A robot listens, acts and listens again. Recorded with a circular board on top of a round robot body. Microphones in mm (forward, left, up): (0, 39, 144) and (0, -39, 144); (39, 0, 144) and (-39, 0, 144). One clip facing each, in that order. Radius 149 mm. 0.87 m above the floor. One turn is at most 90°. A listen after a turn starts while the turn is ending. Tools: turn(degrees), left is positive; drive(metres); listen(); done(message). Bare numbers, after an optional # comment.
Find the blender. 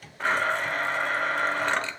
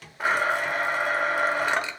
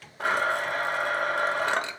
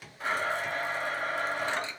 # The blender: 10° right.
turn(-10)
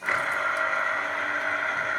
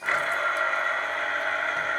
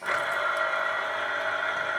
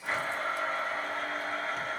done("Facing the blender, 1 to 2 m away.")